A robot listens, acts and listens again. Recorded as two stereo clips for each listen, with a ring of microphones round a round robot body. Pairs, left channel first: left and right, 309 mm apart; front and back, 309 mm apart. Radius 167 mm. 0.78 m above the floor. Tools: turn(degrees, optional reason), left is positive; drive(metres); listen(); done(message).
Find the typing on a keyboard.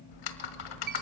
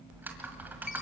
turn(degrees=95, reason="The typing on a keyboard: 95° left.")
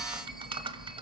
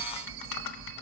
turn(degrees=-15, reason="The typing on a keyboard is now 15° right.")
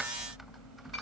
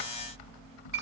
done("Found it: typing on a keyboard, straight ahead.")